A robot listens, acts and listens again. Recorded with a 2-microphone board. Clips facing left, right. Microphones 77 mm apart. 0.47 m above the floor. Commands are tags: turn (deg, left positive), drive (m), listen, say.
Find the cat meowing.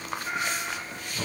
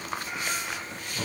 <turn deg="50"/>
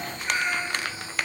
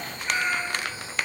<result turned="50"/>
<turn deg="10"/>
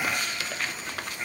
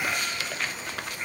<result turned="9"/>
<say>Found it: a cat meowing, straight ahead.</say>